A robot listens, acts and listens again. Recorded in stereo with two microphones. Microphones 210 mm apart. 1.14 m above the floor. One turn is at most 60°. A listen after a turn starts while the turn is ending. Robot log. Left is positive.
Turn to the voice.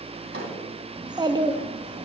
note: The child speaking: about 20° right or 160° right.
cmd yaw -20
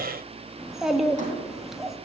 end: Facing the child speaking.